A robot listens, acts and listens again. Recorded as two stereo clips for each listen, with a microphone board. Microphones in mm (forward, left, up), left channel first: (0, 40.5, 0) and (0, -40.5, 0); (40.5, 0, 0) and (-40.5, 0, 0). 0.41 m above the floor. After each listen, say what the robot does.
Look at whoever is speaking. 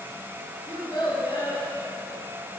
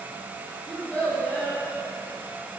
Turn 70° left.
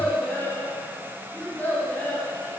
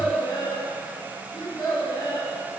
Turn 20° left.
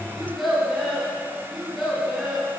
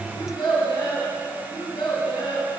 Facing the child speaking, 2 to 4 m away.